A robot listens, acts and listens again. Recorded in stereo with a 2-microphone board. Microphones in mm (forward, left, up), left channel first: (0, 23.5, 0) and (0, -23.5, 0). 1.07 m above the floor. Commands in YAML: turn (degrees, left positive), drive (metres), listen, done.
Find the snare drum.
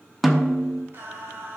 turn: 30
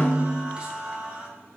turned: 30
turn: 150
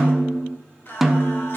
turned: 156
done: "Facing the snare drum."